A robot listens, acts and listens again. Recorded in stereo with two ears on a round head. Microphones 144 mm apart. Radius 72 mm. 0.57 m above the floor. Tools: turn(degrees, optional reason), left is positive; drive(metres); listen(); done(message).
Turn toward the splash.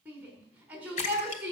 turn(degrees=50, reason="The splash: about 50° left or 130° left.")
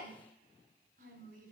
listen()
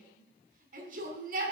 done("I heard a splash, but can't make it out now. It was about straight ahead or 80° left.")